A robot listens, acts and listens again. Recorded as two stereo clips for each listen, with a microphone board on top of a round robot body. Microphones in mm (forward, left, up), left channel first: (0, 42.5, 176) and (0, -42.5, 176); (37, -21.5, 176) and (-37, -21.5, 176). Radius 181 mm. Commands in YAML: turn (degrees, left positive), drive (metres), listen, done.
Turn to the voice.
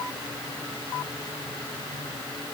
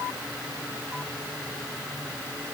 listen: true
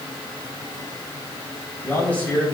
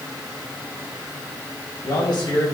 turn: 15
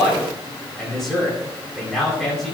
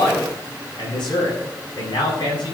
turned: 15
done: "Found it: a man speaking, straight ahead, over 4 m away."